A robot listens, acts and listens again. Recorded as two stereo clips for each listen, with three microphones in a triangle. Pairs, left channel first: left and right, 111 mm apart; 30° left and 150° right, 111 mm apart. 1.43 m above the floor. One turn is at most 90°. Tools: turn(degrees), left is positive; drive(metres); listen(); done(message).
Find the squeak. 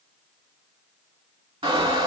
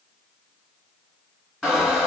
turn(degrees=-65)
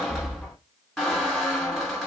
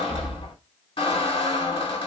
done("Facing the squeak.")